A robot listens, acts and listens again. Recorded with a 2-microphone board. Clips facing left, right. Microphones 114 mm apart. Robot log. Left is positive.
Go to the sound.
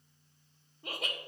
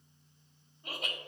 cmd yaw +90
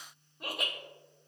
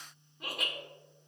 cmd fwd 1.0
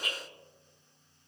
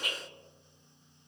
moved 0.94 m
cmd fwd 1.0
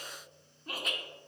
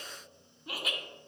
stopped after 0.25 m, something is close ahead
end: I am next to the laughter.